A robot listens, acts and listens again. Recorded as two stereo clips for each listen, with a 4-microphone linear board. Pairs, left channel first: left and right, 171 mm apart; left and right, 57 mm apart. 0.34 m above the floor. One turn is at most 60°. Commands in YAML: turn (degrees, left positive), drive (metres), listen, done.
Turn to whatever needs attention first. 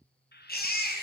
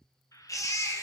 turn: 60
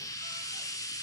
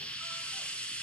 listen: true
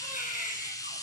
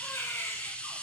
turn: 50
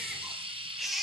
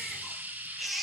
done: "Facing the baby crying, 2 to 4 m away."